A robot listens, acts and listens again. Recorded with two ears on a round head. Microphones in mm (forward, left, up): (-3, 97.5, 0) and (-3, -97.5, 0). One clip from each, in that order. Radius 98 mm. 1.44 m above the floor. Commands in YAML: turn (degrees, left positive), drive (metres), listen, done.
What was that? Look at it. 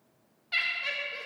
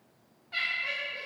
turn: 90
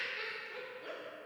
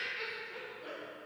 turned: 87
done: "Facing the laughter, under 1 m away."